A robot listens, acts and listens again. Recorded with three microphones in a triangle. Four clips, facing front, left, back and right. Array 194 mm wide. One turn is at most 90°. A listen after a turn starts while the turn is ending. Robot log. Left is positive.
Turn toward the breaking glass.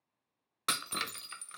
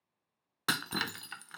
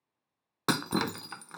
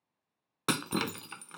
note: The breaking glass: 155° right.
cmd yaw -90
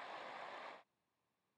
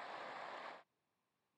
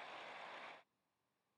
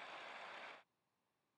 note: Nothing new. It was at 65° right.
cmd yaw -65
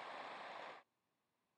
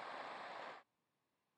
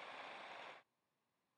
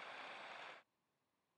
end: I heard breaking glass from this way, but can't make it out now.